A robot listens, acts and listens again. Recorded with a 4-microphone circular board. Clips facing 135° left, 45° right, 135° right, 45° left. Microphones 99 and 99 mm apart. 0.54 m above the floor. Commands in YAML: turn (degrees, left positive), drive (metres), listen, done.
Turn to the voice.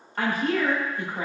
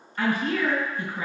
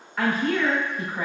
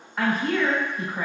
turn: 130
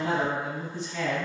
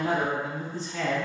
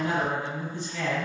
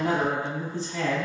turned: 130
done: "Found it: a woman speaking, straight ahead."